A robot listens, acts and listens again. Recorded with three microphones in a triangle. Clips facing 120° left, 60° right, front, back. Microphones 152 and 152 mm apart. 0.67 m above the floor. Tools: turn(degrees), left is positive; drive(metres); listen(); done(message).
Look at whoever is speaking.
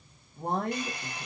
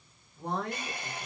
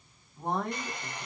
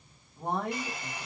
turn(degrees=100)
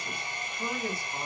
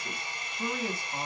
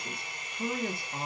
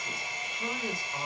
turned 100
done("Found it: a man speaking, straight ahead.")